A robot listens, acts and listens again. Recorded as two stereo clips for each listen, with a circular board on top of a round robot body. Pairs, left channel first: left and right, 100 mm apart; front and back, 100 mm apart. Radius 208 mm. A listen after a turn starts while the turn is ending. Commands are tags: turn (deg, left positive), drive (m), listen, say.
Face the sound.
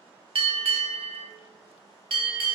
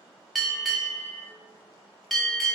<turn deg="-85"/>
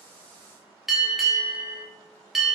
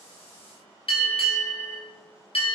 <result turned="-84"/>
<say>Facing the bell.</say>